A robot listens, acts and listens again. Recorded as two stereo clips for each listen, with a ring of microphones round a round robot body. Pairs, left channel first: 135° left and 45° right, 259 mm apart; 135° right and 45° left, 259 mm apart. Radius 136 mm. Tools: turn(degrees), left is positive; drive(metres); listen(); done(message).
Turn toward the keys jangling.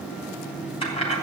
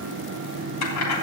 turn(degrees=-160)
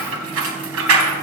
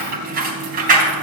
turn(degrees=-15)
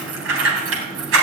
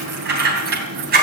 turn(degrees=-10)
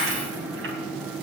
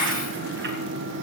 done("Facing the keys jangling.")